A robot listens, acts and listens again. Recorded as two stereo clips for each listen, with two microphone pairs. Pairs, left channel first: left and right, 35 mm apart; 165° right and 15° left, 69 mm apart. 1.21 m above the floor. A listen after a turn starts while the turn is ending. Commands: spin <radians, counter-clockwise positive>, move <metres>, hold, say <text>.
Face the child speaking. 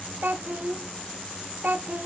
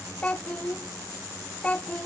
spin -1.75
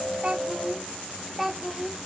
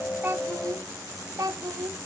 say Facing the child speaking.